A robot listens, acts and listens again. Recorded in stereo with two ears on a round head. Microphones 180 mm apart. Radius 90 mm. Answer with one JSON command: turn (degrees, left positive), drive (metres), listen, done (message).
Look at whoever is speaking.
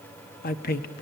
{"turn": 45}
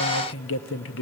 {"turn": 80}
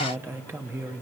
{"turn": -15}
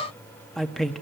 {"done": "Found it: a man speaking, straight ahead, 1 to 2 m away."}